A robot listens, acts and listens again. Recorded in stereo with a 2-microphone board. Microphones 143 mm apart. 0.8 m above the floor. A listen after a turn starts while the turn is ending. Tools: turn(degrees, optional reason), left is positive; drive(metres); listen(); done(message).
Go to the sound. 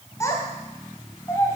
turn(degrees=20, reason="The child speaking: about 20° left or 160° left.")
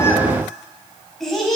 drive(metres=1.0)
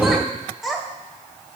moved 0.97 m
drive(metres=1.0)
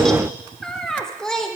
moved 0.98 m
drive(metres=1.0)
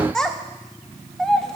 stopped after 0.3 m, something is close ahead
done("I am next to the child speaking.")